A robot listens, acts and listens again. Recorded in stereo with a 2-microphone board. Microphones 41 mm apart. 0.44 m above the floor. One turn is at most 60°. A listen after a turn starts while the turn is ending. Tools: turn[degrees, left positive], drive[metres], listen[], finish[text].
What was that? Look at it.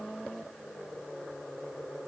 Action: listen[]
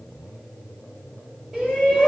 Thought: The shout: about 25° right or 155° right.
Action: turn[-25]
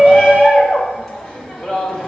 Action: finish[Facing the shout, 1 to 2 m away.]